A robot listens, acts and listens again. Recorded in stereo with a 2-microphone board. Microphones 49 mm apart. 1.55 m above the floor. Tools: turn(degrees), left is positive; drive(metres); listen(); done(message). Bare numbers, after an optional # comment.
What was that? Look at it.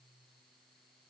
listen()
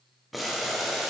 turn(30)
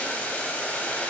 # So it is at 150° left.
turn(150)
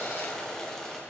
# The boiling is now 15° left.
turn(15)
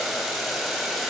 done("Found it: boiling, straight ahead.")